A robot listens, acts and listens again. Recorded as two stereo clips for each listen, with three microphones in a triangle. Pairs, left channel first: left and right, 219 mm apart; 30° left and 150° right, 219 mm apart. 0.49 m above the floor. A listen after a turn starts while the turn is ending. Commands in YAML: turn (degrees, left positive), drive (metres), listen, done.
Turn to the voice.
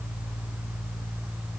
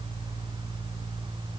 listen: true
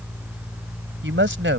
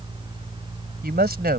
turn: -110
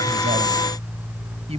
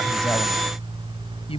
turn: -30
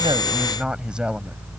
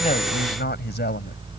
done: "Found it: a woman speaking, straight ahead."